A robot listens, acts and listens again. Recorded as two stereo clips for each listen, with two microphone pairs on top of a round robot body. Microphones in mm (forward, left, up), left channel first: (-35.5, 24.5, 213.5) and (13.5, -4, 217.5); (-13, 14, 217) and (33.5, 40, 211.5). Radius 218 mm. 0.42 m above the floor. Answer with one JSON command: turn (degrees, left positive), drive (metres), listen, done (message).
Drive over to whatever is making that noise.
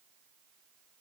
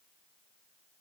{"listen": true}
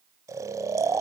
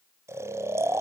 {"drive": 1.0}
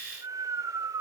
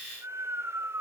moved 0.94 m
{"drive": 1.0}
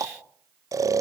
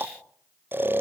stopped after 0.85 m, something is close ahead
{"turn": -10}
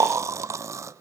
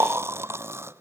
{"done": "Arrived at the snoring, straight ahead."}